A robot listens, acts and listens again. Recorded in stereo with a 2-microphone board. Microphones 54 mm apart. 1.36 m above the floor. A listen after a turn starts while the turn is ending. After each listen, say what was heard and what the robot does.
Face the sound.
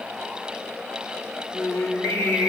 The singing: about 70° left or 110° left. Turn 70° left.
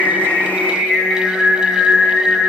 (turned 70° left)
So it is at 30° left. Turn 30° left.
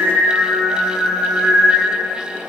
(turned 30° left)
The singing is now 20° left. Turn 20° left.
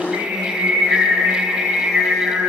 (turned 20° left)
Facing the singing.